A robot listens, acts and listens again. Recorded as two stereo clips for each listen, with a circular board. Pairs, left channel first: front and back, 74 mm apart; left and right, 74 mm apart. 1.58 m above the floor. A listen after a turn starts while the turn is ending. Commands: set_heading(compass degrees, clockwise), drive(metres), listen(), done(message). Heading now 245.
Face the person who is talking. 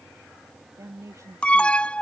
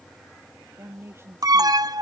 set_heading(25)
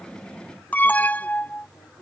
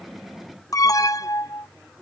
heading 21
listen()
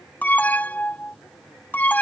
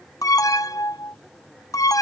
listen()
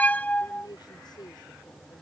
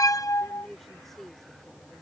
done("Found it: a woman speaking, straight ahead.")